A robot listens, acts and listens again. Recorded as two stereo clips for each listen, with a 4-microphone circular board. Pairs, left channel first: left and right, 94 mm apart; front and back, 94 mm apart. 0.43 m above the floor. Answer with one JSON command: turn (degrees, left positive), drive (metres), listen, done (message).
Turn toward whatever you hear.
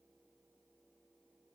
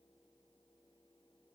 {"listen": true}
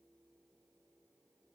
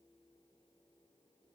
{"listen": true}
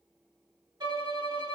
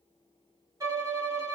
{"turn": -130}
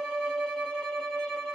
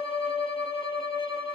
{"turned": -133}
{"done": "Found it: a violin, straight ahead."}